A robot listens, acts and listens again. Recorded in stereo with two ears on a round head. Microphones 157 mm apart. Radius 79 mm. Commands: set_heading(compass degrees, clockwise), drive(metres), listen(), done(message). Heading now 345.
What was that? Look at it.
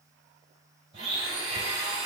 set_heading(20)
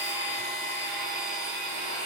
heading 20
done("Facing the blender, 1 to 2 m away.")